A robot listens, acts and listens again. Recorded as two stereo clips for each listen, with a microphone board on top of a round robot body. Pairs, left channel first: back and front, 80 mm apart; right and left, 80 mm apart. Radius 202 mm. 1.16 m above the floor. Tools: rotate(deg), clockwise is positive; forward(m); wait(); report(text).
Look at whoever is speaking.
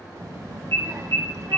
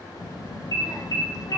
rotate(50)
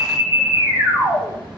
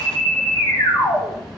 wait()
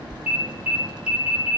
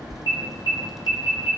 report("Found it: a child speaking, straight ahead.")